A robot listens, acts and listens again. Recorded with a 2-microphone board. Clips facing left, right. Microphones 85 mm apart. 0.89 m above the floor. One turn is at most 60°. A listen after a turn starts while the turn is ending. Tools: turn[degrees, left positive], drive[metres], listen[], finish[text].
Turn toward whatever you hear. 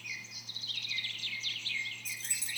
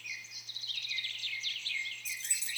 Thought: The keys jangling: about 40° left or 140° left.
Action: turn[40]
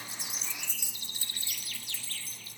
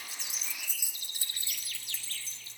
Thought: So it is at 25° right.
Action: turn[-25]
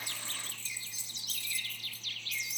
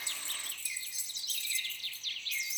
Thought: The keys jangling is now 30° right.
Action: turn[-30]
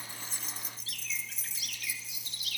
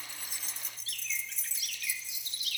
Action: finish[Found it: keys jangling, straight ahead, 2 to 4 m away.]